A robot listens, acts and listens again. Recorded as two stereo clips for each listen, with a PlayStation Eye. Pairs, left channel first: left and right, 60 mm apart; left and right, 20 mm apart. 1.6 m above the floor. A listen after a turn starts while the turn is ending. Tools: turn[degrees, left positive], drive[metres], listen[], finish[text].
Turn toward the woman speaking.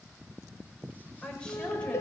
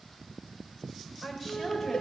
Thought: The woman speaking: about 15° left or 165° left.
Action: turn[15]
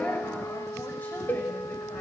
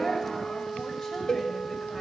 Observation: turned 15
Action: listen[]
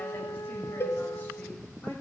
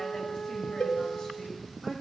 Action: listen[]
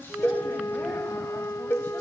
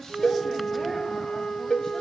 Action: finish[I heard a woman speaking, but can't make it out now. It was about straight ahead or 150° left.]